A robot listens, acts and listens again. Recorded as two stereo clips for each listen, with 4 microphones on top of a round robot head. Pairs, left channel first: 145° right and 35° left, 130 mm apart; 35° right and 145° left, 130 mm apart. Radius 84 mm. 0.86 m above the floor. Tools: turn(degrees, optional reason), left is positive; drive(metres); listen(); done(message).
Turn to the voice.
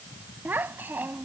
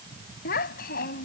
turn(degrees=-45, reason="The child speaking: 45° right.")
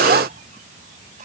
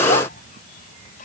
listen()
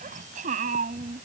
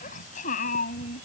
done("Found it: a child speaking, straight ahead.")